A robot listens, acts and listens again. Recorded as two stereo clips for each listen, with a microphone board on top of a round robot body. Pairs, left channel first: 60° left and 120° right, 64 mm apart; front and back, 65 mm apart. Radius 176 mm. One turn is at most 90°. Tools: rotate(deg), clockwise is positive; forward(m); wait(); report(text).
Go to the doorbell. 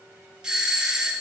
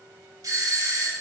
rotate(-90)
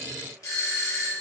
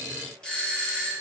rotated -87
rotate(-75)
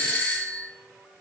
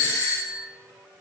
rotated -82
forward(1.0)
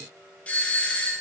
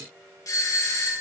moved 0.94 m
forward(1.0)
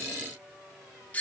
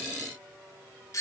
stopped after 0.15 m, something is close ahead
report("Arrived at the doorbell, straight ahead.")